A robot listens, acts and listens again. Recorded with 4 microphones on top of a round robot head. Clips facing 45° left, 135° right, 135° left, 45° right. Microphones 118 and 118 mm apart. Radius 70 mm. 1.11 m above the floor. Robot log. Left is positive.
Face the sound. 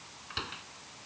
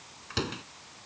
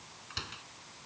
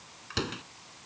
note: The door slam: 80° right.
cmd yaw -80
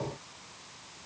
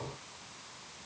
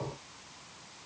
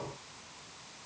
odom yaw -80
end: Facing where the door slam came from. I can't hear it now.